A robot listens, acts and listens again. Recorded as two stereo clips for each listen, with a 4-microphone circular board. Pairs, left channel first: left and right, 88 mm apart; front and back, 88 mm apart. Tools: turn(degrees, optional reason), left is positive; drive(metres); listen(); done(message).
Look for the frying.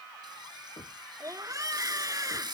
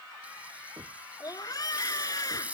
turn(degrees=-110, reason="The frying: 110° right.")
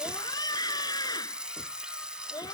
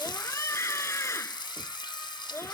turn(degrees=-10, reason="The frying is now 10° right.")
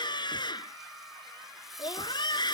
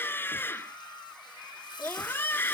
listen()
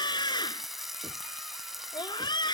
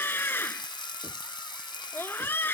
done("Facing the frying.")